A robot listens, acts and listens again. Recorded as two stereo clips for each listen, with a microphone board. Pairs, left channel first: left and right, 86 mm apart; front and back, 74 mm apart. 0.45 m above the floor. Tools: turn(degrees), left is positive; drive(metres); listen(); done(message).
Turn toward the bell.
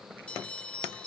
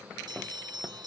turn(degrees=165)
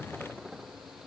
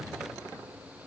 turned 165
listen()
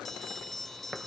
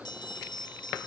done("Facing the bell.")